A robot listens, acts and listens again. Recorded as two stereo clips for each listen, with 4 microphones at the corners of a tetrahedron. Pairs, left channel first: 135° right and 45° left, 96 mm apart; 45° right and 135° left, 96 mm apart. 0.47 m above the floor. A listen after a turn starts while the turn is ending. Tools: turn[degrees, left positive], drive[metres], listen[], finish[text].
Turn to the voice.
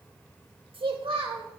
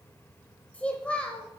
Thought: The child speaking: 30° left.
Action: turn[30]
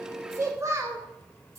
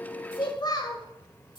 Thought: The child speaking is now 15° right.
Action: turn[-15]
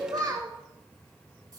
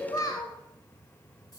Action: finish[Facing the child speaking.]